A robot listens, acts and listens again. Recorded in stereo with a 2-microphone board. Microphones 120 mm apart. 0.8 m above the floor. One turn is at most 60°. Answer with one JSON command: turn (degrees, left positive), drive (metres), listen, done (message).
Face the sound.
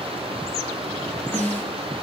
{"turn": 15}
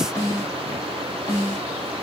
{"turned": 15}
{"turn": 60}
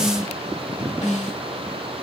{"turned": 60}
{"turn": 60}
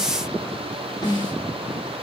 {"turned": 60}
{"turn": 40}
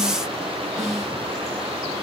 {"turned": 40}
{"done": "Found it: a snare drum, straight ahead."}